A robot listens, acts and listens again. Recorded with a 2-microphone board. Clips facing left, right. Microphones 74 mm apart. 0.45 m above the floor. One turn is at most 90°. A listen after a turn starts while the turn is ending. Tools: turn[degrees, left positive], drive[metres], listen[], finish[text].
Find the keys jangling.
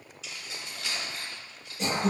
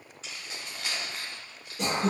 Thought: The keys jangling: about 55° right or 125° right.
Action: turn[-55]
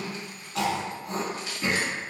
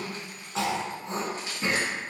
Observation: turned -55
Thought: So it is at 40° right.
Action: turn[-40]
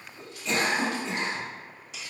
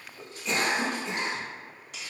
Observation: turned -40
Thought: The keys jangling is now 60° right.
Action: turn[-60]
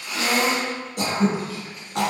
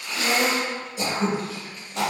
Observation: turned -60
Action: listen[]
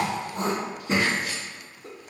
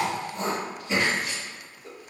Action: listen[]
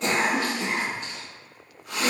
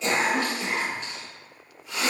Action: finish[Facing where the keys jangling came from. I can't hear it now.]